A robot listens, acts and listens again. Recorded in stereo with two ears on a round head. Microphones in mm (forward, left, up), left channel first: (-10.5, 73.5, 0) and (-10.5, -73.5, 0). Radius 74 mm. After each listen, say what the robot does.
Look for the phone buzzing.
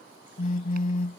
Turn 45° left.
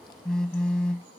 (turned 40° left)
Found it: a phone buzzing, straight ahead.